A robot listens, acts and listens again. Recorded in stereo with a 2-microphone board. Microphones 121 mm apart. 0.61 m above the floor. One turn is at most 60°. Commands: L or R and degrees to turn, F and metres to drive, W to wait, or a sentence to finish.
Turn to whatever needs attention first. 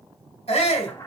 L55
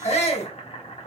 L60
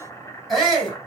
Found it: a shout, straight ahead.